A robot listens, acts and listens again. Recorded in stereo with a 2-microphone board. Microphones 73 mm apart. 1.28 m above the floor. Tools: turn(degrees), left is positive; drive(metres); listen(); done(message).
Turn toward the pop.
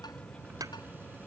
turn(degrees=-55)
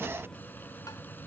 listen()
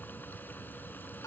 done("I heard a pop, but can't make it out now. It was about straight ahead or 70° right.")